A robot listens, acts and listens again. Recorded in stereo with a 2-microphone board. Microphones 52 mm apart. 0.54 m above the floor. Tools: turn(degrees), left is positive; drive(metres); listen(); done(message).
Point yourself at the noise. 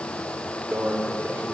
turn(degrees=-60)
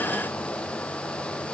listen()
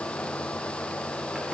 listen()
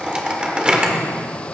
turn(degrees=-20)
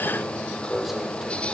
done("Facing the microwave, 1 to 2 m away.")